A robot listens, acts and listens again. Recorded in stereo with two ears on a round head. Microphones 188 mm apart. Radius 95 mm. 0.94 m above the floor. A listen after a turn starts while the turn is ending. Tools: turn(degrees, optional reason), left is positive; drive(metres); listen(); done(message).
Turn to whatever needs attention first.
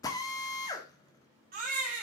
turn(degrees=-40, reason="The baby crying: about 40° right or 140° right.")
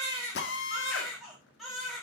done("Found it: a baby crying, straight ahead, 2 to 4 m away.")